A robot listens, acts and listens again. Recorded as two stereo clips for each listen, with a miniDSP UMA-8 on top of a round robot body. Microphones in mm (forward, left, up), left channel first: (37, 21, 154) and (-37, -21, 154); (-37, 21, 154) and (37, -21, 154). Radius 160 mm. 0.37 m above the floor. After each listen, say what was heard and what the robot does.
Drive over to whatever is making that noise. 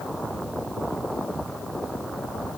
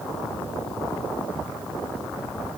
Keep listening.
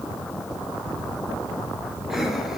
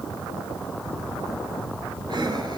The breathing: 65° right. Turn 65° right.
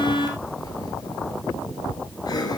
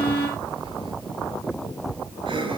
The breathing is now 15° right. Turn 15° right.
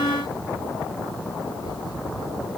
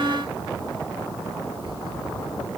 Keep listening.
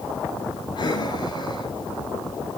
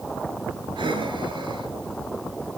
Drive 1.0 m forward.
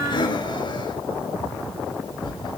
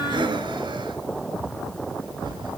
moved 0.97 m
Drive 1.0 m forward.
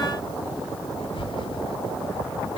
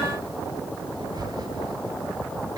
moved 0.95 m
The breathing is now 10° left. Turn 10° left.
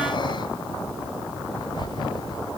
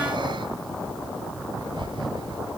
Drive 1.0 m forward.
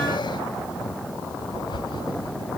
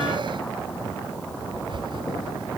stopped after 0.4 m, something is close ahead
Arrived at the breathing, straight ahead.